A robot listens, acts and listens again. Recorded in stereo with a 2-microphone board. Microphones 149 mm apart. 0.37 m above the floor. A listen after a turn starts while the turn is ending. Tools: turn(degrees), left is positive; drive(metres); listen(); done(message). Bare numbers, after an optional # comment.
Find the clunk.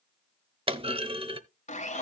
# The clunk: about 40° right or 140° right.
turn(-40)
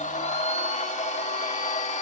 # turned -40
listen()
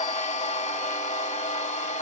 done("I heard a clunk, but can't make it out now. It was about straight ahead or 100° right.")